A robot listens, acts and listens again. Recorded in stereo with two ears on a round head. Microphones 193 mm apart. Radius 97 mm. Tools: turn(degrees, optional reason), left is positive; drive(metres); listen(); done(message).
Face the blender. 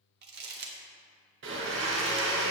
turn(degrees=-60, reason="The blender: about 60° right or 120° right.")
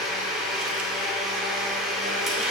done("Found it: a blender, straight ahead.")